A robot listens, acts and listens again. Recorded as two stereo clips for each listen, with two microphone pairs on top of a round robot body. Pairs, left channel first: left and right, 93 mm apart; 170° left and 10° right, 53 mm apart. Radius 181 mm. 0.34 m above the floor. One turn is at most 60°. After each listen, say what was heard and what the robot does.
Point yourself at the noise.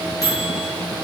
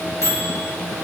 The microwave: 145° left. Turn 60° left.
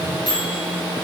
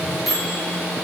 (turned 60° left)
The microwave is now 75° left. Turn 60° left.
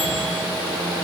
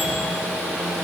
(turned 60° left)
Nothing new. It was at 15° left. Turn 15° left.
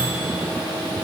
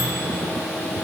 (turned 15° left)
Keep listening.
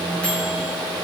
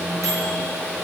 I heard a microwave from this way, but can't make it out now.